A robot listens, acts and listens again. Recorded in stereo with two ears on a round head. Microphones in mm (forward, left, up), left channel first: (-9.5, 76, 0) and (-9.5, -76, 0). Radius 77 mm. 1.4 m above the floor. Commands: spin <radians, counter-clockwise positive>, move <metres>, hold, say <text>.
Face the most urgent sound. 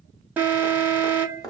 spin -0.52
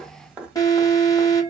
spin 0.35
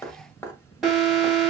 say Found it: an alarm, straight ahead.